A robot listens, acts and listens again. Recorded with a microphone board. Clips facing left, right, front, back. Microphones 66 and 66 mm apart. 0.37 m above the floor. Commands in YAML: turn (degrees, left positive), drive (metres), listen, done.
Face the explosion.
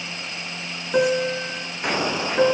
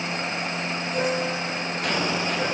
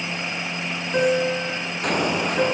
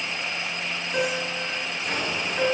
turn: 20
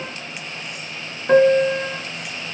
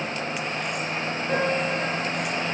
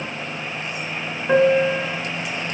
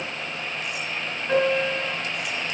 done: "Facing where the explosion came from. I can't hear it now."